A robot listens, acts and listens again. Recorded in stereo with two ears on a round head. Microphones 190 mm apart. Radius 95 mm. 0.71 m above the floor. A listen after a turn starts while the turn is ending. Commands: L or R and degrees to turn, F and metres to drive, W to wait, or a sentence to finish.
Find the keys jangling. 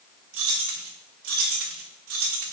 R70
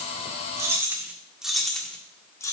L15
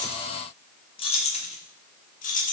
L40
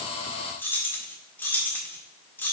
L10
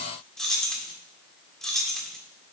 Facing the keys jangling, 1 to 2 m away.